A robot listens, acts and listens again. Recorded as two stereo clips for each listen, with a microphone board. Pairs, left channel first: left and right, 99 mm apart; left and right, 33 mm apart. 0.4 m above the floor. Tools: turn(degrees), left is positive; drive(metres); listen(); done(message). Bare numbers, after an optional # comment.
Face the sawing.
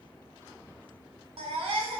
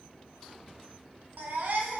listen()
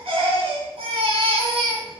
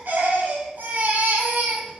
listen()
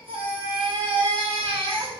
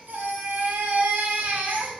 done("I can't make out sawing to turn to.")